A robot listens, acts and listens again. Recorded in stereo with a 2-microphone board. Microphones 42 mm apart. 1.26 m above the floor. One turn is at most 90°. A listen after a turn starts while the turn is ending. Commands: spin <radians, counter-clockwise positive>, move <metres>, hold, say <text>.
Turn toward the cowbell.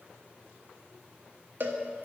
spin -0.96
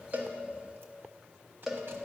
spin -0.17
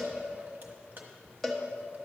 say Facing the cowbell, 1 to 2 m away.